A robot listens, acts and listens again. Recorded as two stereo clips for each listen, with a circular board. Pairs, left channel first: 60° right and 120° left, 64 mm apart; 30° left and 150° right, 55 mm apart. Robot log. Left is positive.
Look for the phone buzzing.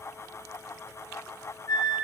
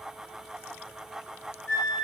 cmd idle
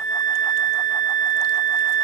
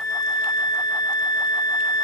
cmd idle
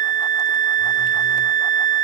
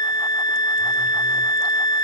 end: I can't make out a phone buzzing, only a flute.